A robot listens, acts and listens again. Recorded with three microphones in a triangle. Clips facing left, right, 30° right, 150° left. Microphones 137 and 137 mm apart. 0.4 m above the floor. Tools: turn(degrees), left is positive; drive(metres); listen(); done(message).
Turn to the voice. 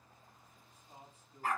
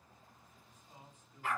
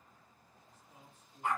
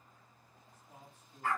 turn(degrees=140)
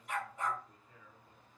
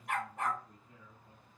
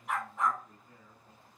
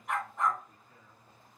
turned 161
turn(degrees=-20)
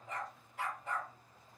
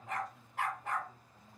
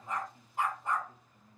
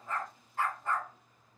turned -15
listen()
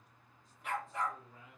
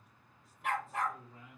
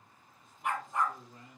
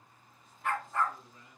done("Found it: a man speaking, straight ahead, 2 to 4 m away.")